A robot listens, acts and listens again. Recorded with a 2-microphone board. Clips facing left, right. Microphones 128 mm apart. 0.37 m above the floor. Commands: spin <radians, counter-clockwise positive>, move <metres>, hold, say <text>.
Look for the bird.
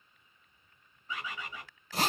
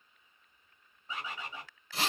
spin -0.52
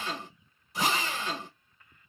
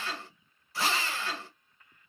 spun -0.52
hold
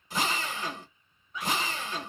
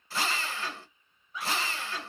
say Found it: a bird, straight ahead.